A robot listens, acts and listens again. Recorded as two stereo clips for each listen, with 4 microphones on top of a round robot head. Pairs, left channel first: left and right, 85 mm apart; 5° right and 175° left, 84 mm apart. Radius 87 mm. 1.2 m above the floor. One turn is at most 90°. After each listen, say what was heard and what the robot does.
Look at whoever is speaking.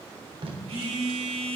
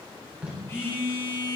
Keep listening.
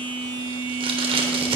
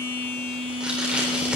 Keep listening.
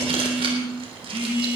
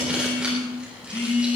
I can't make out anyone speaking, only a phone buzzing and tape being pulled.